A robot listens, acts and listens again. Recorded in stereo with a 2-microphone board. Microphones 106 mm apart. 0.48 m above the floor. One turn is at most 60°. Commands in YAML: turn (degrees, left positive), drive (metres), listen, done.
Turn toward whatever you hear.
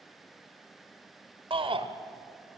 turn: -55
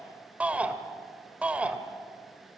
turn: -15
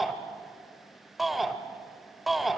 done: "Found it: a shout, straight ahead, 1 to 2 m away."